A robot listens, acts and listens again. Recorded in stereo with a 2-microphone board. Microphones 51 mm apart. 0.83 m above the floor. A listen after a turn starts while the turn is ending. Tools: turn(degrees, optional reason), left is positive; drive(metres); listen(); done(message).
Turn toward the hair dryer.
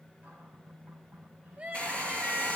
turn(degrees=25, reason="The hair dryer: about 25° left or 155° left.")
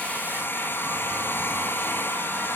turn(degrees=130, reason="So it is at 130° left.")
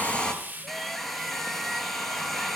done("Facing the hair dryer.")